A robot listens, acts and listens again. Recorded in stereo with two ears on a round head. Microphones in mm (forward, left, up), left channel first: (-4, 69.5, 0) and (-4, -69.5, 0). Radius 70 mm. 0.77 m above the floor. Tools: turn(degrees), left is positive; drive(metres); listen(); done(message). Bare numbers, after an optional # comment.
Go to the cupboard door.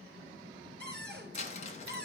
turn(30)
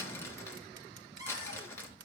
# So it is at 20° right.
turn(-20)
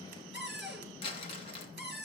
drive(1.0)
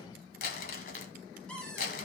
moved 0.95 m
drive(1.0)
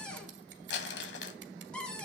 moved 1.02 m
drive(1.0)
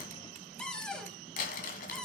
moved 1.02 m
drive(1.0)
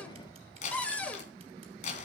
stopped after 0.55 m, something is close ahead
# The cupboard door is now 10° left.
turn(10)
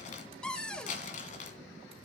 done("I am next to the cupboard door.")